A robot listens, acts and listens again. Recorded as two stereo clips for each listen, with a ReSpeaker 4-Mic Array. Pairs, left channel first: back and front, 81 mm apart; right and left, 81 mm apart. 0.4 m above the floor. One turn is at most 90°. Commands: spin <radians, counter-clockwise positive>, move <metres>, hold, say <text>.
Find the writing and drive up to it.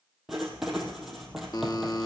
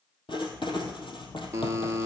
spin -1.48
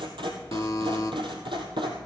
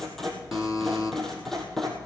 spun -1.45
move 1.0
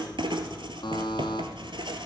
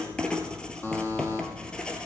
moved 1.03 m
spin -0.17
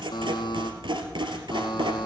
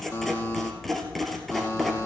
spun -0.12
move 1.0
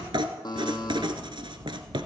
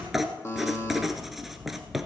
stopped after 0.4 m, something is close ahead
say Arrived at the writing, straight ahead.